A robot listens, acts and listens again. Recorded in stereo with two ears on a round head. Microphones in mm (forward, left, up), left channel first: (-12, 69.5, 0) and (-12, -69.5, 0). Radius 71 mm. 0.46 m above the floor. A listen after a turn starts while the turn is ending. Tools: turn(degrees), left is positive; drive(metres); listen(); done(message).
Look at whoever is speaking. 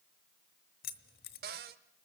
listen()
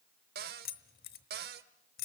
listen()
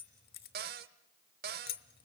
done("I can't make out anyone speaking to turn to.")